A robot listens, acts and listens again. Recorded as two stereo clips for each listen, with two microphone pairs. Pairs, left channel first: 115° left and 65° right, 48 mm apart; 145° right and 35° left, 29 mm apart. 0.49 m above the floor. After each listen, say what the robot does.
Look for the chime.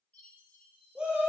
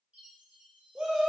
Turn 65° left.
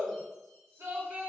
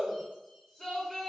Keep listening.
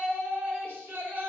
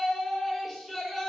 Keep listening.
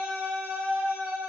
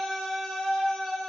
Facing where the chime came from. I can't hear it now.